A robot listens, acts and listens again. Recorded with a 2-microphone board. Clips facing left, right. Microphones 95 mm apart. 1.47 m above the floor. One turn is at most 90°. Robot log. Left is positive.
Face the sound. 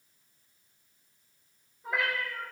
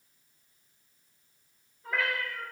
cmd yaw +30
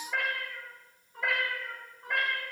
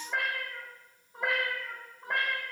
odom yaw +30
note: So it is at 30° right.
cmd yaw -30
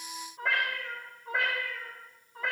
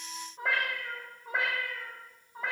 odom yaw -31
note: The cat meowing is now 15° right.
cmd yaw -15
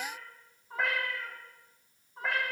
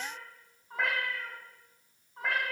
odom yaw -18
end: Facing the cat meowing.